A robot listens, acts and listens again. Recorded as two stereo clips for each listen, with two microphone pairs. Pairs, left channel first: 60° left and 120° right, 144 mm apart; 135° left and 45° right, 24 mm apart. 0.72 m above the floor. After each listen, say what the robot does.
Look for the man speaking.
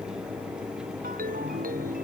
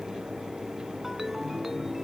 Keep listening.
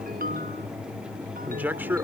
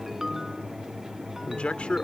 Turn 165° left.
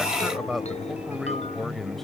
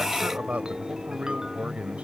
Turn 30° right.
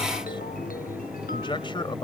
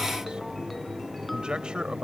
Found it: a man speaking, straight ahead.